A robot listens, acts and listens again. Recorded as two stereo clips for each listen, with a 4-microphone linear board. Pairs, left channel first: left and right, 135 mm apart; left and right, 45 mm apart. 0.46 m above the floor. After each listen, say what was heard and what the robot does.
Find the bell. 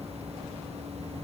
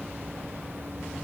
Keep listening.
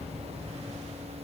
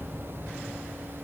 Keep listening.
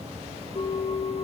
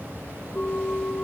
The bell: about 50° left or 130° left. Turn 50° left.
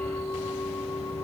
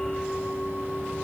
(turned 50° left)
Found it: a bell, straight ahead, over 4 m away.